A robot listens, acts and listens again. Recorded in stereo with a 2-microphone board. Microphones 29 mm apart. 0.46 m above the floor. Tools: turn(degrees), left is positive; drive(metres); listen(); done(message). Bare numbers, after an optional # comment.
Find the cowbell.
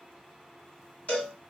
# The cowbell: about 55° left or 125° left.
turn(55)
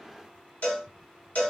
# So it is at 70° left.
turn(70)
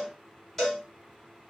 # The cowbell is now 15° left.
turn(15)
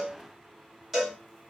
done("Found it: a cowbell, straight ahead.")